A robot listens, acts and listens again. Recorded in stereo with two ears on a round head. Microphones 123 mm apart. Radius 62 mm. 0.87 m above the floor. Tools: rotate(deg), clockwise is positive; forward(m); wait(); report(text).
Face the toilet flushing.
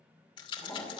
rotate(-30)
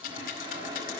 rotate(30)
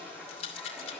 rotate(10)
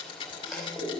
report("Found it: a toilet flushing, straight ahead.")